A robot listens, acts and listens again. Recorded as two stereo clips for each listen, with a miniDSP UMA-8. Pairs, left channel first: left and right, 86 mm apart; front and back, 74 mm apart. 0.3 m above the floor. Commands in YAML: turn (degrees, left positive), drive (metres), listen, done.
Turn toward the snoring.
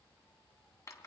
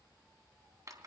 listen: true
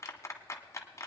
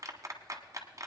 listen: true
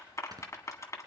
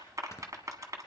turn: -50
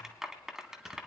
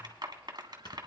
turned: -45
listen: true
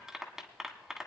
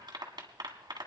listen: true
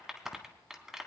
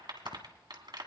done: "Facing where the snoring came from. I can't hear it now."